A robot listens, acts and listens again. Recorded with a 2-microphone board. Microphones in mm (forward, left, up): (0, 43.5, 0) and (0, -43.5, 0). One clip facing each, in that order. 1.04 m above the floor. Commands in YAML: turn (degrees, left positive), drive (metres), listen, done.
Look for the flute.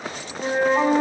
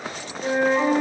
turn: 40
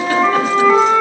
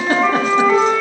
done: "Facing the flute, 2 to 4 m away."